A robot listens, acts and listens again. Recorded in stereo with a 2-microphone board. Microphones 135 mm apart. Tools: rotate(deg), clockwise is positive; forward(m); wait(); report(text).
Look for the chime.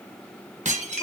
wait()
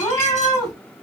wait()
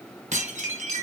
report("I can't make out a chime to turn to.")